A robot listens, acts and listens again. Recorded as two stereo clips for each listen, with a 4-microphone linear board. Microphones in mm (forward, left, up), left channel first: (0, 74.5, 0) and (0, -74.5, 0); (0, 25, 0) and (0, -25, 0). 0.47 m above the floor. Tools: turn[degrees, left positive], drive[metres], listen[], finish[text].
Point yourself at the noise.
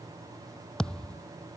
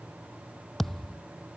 Action: turn[30]
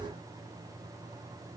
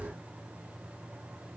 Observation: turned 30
Action: listen[]
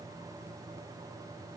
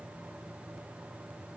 Action: finish[I heard a thud, but can't make it out now. It was about 25° right or 145° left.]